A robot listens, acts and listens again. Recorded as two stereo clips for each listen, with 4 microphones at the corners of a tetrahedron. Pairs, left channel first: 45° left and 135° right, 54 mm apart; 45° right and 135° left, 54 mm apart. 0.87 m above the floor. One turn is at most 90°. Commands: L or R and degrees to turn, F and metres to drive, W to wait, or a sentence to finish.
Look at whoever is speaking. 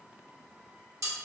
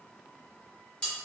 W
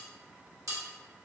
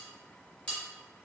W
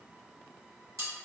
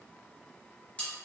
I can't make out anyone speaking, only cutlery clinking.